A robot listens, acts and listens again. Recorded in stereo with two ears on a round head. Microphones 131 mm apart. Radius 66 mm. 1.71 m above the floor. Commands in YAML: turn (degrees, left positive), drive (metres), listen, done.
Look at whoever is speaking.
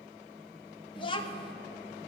turn: 40
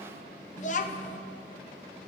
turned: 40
turn: 95
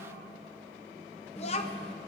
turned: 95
turn: 55
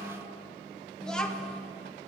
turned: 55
done: "Found it: a child speaking, straight ahead."